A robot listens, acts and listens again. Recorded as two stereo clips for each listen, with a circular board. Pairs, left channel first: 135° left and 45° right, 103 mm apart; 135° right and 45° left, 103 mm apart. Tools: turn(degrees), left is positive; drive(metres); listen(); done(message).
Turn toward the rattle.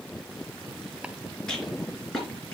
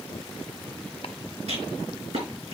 turn(degrees=50)
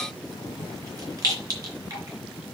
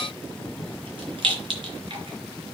turn(degrees=10)
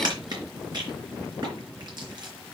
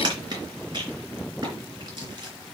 done("Facing the rattle.")